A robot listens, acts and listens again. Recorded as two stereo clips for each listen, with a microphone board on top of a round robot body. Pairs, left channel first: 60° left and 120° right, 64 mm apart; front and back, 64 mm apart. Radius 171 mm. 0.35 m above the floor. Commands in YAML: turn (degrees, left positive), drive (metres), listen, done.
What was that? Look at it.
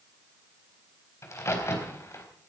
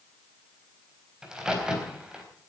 turn: 100
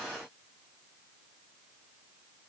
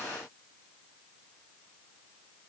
done: "Facing where the crack came from. I can't hear it now."